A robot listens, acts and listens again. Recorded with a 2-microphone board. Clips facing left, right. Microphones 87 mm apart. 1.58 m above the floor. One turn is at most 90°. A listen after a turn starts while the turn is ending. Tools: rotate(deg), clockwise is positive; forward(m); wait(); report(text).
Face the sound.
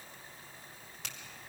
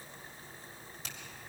rotate(-90)
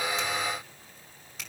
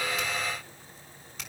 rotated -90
report("Found it: a finger snap, straight ahead, over 4 m away.")